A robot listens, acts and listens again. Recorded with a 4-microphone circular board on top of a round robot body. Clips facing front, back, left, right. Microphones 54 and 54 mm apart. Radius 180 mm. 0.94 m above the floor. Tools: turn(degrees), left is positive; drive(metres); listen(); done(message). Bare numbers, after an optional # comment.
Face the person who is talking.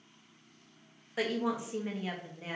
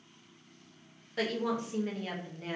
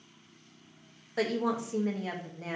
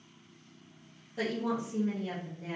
# The woman speaking: 80° left.
turn(80)
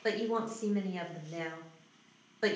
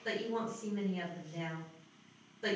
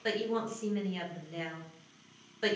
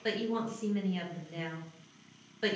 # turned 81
done("Found it: a woman speaking, straight ahead.")